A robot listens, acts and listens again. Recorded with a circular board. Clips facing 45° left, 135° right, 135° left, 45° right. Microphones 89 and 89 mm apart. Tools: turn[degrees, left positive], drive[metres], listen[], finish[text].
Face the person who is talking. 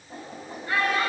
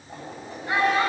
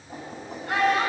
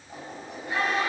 Thought: The child speaking: 155° left.
Action: turn[155]
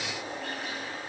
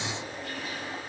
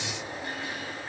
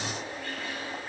Action: listen[]
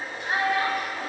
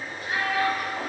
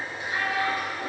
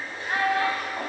Thought: The child speaking is now 10° right.
Action: turn[-10]
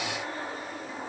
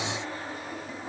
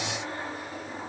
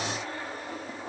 Action: listen[]
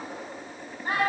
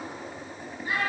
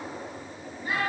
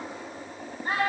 Action: finish[Facing the child speaking, over 4 m away.]